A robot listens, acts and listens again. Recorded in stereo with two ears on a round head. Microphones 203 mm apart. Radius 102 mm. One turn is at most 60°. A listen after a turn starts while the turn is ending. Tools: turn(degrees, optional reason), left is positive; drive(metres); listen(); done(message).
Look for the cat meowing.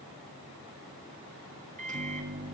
listen()
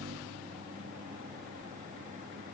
listen()
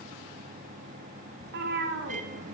turn(degrees=-50, reason="The cat meowing: about 50° right or 130° right.")
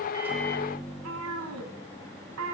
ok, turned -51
turn(degrees=-60, reason="So it is at 75° right.")
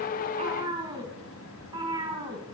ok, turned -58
turn(degrees=-20, reason="The cat meowing is now 20° right.")
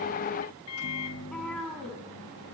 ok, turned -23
done("Facing the cat meowing, 1 to 2 m away.")